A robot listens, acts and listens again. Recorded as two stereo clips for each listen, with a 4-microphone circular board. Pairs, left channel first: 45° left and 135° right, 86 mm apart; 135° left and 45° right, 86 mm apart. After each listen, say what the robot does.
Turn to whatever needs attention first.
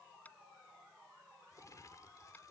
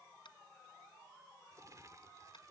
Keep listening.
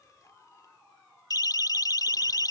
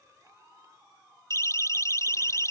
Turn 85° left.
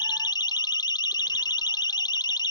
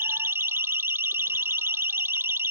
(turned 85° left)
Turn 15° left.
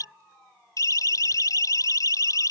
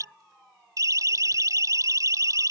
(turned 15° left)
Found it: a siren, straight ahead.